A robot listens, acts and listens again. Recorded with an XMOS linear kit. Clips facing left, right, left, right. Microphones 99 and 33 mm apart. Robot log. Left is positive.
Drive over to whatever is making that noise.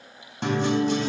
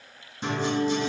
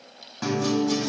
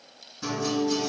note: The guitar: about 70° left or 110° left.
cmd yaw +70
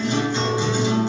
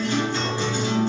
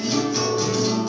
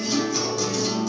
note: So it is at 20° left.
cmd yaw +20
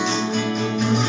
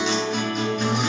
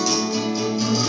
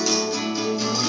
cmd fwd 1.0
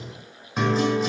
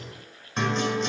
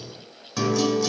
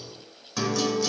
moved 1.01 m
cmd fwd 1.0
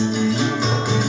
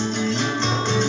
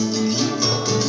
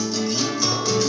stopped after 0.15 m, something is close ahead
note: The guitar is now 10° left.
cmd yaw +10
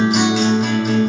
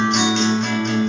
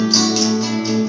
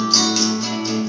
end: I am next to the guitar.